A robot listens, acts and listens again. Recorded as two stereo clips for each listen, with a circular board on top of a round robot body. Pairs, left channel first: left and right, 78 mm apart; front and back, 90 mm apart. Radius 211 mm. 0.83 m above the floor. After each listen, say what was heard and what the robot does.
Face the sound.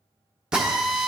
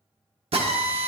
The drill: 170° right. Turn 170° right.
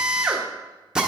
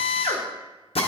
The drill is now 10° right. Turn 10° right.
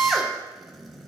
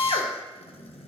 Facing the drill, under 1 m away.